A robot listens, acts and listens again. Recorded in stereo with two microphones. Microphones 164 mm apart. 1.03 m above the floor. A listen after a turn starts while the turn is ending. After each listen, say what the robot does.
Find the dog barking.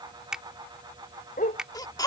Turn 55° left.
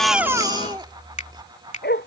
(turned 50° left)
Turn 85° left.
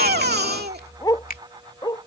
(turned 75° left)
Turn 25° left.
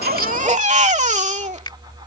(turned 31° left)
Keep listening.
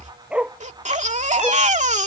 Facing the dog barking.